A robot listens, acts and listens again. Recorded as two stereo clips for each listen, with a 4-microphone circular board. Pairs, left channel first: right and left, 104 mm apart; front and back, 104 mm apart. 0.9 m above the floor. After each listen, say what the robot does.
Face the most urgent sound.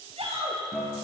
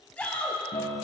Turn 80° left.
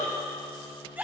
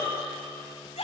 Turn 15° left.
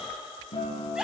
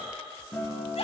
Found it: a shout, straight ahead, over 4 m away.